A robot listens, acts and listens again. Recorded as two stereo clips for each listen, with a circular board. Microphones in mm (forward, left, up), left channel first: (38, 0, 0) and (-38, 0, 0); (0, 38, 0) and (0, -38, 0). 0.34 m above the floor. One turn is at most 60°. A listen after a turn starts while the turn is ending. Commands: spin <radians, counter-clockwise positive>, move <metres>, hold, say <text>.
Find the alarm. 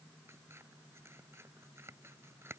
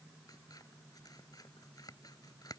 hold
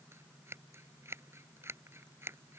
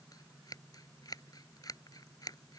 hold
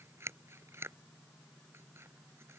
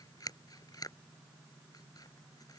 say I can't make out an alarm to turn to.